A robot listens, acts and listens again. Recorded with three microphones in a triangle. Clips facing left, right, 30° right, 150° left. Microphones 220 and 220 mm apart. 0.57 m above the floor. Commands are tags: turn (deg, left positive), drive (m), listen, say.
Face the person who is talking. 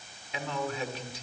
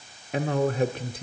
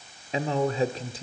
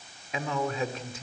<turn deg="-80"/>
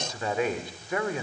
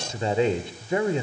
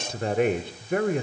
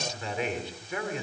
<turn deg="-30"/>
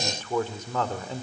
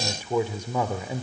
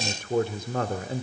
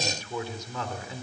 <turn deg="-15"/>
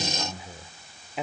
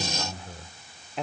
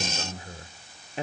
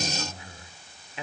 <say>Found it: a man speaking, straight ahead.</say>